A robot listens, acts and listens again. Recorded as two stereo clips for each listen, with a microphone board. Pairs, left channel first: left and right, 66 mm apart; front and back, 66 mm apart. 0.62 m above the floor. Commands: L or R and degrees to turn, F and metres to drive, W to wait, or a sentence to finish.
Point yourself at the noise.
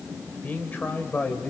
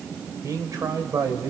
L155
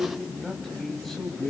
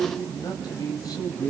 Found it: a man speaking, straight ahead.